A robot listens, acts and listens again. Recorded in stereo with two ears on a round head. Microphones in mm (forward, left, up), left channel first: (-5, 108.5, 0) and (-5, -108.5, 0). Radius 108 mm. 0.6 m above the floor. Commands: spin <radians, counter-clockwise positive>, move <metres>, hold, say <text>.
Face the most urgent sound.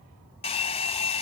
hold
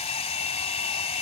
hold
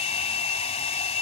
say I can't make out anything urgent, only a hair dryer.